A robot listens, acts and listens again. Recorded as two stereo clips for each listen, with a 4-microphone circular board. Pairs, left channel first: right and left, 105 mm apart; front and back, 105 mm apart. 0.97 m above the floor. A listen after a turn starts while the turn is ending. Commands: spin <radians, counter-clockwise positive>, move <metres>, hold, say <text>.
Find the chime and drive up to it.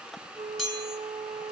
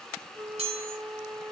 spin 3.14
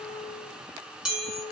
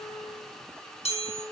move 1.0
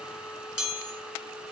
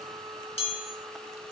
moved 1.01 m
spin 0.17
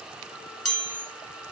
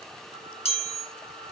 move 1.0
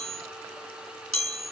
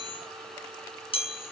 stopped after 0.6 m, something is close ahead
say I am next to the chime.